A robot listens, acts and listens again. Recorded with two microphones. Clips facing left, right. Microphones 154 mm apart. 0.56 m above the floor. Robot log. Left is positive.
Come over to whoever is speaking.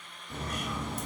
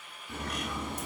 cmd idle
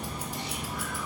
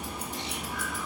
cmd idle
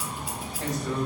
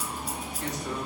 note: The man speaking: about 50° left or 130° left.
cmd yaw +50
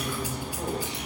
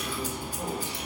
cmd idle
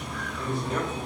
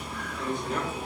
cmd fwd 1.0
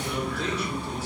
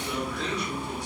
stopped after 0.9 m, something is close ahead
cmd idle
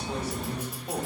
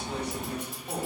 end: I am next to the man speaking.